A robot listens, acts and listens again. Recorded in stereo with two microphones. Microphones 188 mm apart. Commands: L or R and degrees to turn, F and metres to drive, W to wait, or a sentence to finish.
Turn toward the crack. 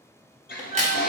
R35
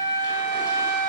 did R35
W
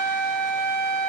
I heard a crack, but can't make it out now. It was about straight ahead or 110° right.